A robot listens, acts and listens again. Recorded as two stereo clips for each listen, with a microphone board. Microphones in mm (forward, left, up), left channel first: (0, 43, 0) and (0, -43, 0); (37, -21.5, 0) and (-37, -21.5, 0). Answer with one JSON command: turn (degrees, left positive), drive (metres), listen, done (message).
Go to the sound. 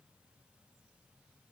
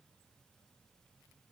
{"listen": true}
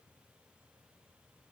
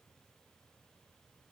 {"listen": true}
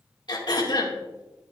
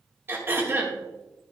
{"turn": 120}
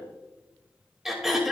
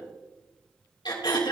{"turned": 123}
{"drive": 1.0}
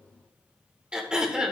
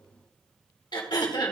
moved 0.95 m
{"turn": -10}
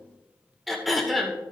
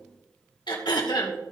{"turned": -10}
{"drive": 1.0}
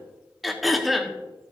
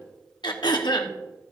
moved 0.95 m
{"drive": 1.0}
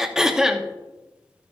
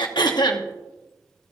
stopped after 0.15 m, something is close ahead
{"done": "Arrived at the throat clearing, straight ahead."}